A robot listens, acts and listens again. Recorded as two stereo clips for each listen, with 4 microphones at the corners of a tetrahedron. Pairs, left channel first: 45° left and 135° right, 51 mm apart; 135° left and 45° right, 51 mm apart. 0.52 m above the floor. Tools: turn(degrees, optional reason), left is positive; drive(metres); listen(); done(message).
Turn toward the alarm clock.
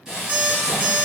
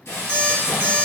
turn(degrees=-80, reason="The alarm clock: 80° right.")
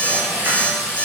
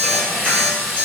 done("Facing the alarm clock, under 1 m away.")